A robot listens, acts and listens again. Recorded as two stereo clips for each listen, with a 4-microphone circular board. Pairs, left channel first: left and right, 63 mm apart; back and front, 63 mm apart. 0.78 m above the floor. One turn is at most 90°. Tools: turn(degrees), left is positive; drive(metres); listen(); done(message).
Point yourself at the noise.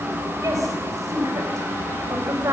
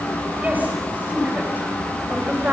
turn(degrees=-65)
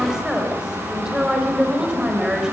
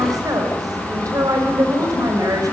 turn(degrees=-10)
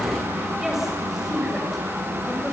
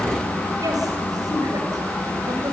done("Found it: a woman speaking, straight ahead.")